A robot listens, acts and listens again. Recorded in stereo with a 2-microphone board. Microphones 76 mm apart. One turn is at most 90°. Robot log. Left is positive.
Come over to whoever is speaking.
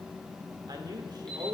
note: The man speaking: about 65° right or 115° right.
cmd yaw -65
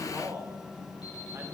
note: So it is at 35° right.
cmd yaw -35
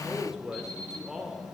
cmd fwd 1.0
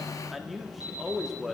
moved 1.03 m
cmd fwd 1.0
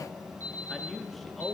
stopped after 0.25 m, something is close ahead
end: Arrived at the man speaking, straight ahead.